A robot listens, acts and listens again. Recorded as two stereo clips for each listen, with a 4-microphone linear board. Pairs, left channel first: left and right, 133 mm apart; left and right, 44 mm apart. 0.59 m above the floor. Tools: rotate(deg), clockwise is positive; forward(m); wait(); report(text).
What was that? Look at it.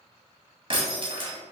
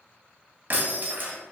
rotate(45)
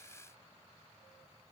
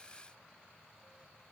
wait()
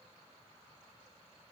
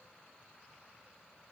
report("I heard breaking glass, but can't make it out now. It was about straight ahead or 90° right.")